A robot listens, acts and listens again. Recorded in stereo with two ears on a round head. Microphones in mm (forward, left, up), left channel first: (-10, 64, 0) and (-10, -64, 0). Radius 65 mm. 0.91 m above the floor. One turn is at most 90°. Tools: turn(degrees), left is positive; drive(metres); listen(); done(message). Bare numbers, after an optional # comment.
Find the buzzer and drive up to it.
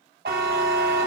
turn(-90)
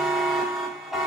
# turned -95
drive(1.0)
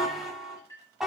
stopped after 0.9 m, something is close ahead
done("Arrived at the buzzer, straight ahead.")